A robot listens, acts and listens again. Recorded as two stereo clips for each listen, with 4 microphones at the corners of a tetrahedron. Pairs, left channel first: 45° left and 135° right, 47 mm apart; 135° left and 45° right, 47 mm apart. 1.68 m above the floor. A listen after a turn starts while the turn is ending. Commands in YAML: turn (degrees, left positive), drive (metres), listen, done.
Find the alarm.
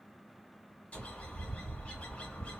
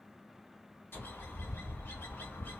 listen: true
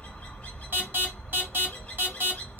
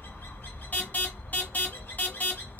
turn: -175
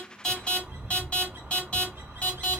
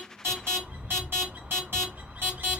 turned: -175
turn: -20
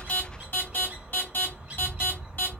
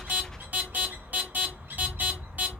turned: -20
done: "Facing the alarm."